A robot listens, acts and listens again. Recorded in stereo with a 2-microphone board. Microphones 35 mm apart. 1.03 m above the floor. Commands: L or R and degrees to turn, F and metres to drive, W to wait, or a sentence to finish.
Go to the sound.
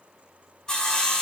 L20
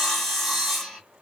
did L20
F1.0
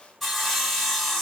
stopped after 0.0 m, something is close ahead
Something is in my way. I am facing the sawing but have not reached it.